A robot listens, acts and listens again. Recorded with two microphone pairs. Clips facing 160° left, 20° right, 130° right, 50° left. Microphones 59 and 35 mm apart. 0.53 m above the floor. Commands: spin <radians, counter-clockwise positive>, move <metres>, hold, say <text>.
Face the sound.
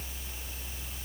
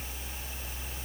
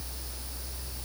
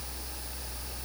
hold
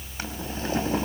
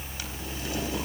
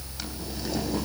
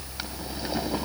spin 2.01
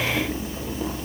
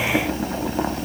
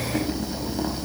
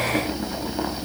spin -0.35
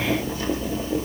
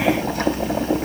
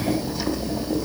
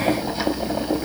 say Found it: boiling, straight ahead.